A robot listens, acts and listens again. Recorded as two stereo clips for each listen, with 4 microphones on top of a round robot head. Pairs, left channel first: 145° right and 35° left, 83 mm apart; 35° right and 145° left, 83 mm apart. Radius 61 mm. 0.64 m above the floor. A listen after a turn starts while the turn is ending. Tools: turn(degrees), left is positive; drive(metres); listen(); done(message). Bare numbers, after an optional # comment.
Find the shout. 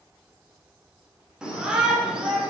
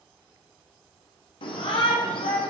# The shout: 45° right.
turn(-45)
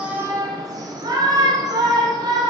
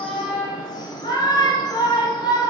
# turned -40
done("Found it: a shout, straight ahead.")